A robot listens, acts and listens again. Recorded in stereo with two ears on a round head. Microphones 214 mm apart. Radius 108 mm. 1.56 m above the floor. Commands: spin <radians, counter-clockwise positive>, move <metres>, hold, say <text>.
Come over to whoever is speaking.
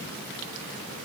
hold
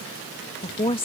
spin 0.44
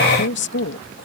spin 2.27
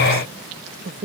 spin -0.70
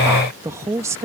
spin -0.17
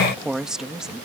move 1.0
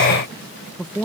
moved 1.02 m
move 1.0
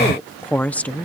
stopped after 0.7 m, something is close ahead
say Arrived at the woman speaking, straight ahead.